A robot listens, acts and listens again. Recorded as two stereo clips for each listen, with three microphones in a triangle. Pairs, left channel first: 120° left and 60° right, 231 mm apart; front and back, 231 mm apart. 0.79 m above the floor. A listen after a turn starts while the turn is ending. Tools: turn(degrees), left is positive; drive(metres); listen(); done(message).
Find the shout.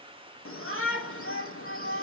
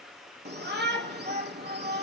turn(degrees=140)
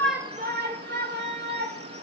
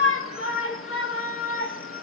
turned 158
turn(degrees=-20)
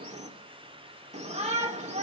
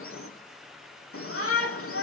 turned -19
done("Found it: a shout, straight ahead.")